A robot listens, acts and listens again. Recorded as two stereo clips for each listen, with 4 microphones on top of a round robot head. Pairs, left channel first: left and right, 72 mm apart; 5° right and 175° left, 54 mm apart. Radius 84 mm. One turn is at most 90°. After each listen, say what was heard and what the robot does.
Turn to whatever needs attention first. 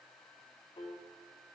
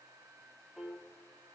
Keep listening.
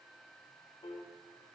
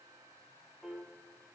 Keep listening.
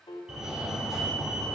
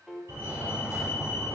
The fire alarm: 170° right. Turn 90° right.
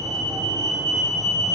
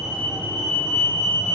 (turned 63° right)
The fire alarm is now 110° right. Turn 90° right.
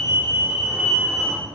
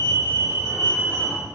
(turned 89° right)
The fire alarm is now 20° right. Turn 20° right.
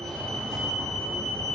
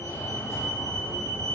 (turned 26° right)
The fire alarm is now 10° left. Turn 10° left.
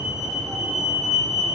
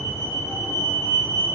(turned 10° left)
Facing the fire alarm.